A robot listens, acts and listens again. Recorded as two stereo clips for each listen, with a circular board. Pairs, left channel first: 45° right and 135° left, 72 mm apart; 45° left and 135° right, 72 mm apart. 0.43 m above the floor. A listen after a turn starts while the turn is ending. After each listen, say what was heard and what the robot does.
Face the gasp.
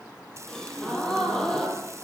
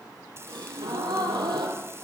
The gasp: 125° right. Turn 125° right.
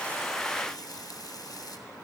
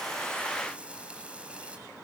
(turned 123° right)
I heard a gasp from this way, but can't make it out now.